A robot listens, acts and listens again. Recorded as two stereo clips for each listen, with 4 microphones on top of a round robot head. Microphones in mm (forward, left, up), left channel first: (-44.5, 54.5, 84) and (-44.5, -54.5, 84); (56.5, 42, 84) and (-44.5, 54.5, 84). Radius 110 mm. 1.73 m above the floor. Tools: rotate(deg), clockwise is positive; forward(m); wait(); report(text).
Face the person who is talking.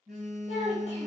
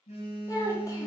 rotate(-50)
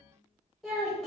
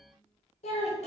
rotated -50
report("Facing the child speaking, 1 to 2 m away.")